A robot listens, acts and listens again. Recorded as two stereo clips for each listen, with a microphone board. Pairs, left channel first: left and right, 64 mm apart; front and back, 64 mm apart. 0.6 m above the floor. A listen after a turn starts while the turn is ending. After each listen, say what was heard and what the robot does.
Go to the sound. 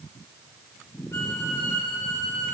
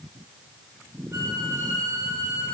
The violin: 135° left. Turn 135° left.
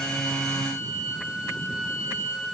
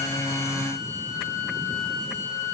The violin is now 10° right. Turn 10° right.
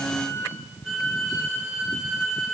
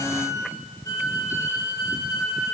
Drive 1.0 m forward.
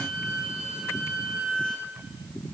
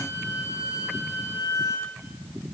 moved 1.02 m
The violin is now 10° right. Turn 10° right.
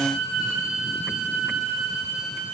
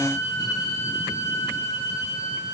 Drive 1.0 m forward.
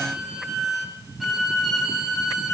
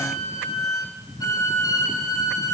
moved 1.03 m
Drive 1.0 m forward.
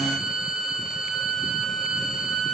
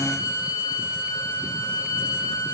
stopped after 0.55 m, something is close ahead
Arrived at the violin, straight ahead.